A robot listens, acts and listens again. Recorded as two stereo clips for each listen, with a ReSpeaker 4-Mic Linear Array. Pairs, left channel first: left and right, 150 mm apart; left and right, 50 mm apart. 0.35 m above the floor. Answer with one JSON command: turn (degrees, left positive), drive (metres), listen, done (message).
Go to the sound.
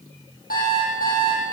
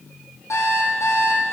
{"turn": 90}
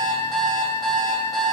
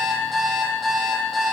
{"drive": 1.0}
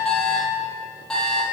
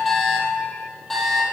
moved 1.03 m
{"drive": 1.0}
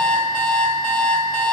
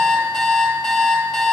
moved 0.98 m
{"drive": 1.0}
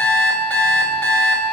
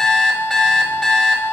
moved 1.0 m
{"turn": 10}
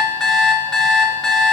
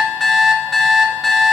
{"drive": 1.0}
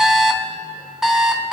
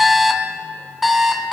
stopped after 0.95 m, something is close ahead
{"done": "I am next to the alarm clock."}